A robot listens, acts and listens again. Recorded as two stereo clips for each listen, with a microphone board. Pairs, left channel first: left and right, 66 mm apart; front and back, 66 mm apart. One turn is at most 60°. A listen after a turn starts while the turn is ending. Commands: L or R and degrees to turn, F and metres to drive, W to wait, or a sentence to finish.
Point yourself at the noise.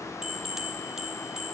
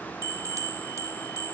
R60
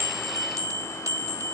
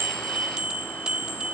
R60
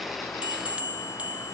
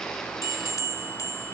R25
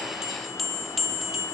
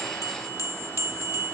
Facing the bell, 1 to 2 m away.